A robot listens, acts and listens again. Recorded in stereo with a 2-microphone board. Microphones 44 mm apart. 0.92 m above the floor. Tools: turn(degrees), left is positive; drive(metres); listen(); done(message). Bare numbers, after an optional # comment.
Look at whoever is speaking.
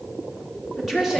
turn(-30)
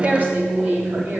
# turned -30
# So it is at 130° right.
turn(-130)
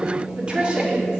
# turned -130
# The woman speaking is now 20° right.
turn(-20)
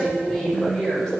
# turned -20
# The woman speaking is now 15° left.
turn(15)
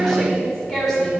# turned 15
# The woman speaking is now 10° left.
turn(10)
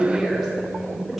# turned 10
listen()
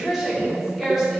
done("Found it: a woman speaking, straight ahead, over 4 m away.")